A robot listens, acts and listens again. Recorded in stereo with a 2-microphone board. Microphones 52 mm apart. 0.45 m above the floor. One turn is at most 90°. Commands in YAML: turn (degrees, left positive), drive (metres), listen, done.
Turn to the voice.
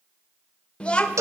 turn: 20
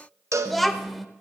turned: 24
done: "Found it: a child speaking, straight ahead, under 1 m away."